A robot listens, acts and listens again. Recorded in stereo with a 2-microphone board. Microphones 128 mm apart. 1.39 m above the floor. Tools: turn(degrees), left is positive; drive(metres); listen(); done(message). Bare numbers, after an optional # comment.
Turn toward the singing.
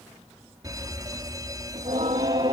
# The singing: about 50° right or 130° right.
turn(-50)
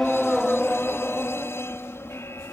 # So it is at 20° left.
turn(20)
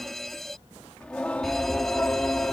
# The singing is now 15° left.
turn(15)
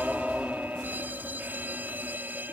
done("Facing the singing.")